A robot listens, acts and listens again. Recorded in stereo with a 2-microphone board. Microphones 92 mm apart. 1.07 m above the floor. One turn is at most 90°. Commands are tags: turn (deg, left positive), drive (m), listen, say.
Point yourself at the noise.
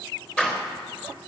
<turn deg="30"/>
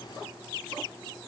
<listen/>
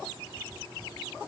<say>I heard a door slam, but can't make it out now. It was about 20° right or 140° left.</say>